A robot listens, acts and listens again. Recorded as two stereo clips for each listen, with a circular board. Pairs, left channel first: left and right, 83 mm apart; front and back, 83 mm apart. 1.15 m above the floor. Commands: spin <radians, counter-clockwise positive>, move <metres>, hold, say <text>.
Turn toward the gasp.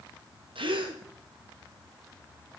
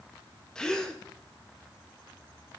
spin -1.40
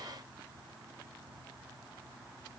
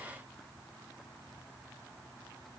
say Facing where the gasp came from. I can't hear it now.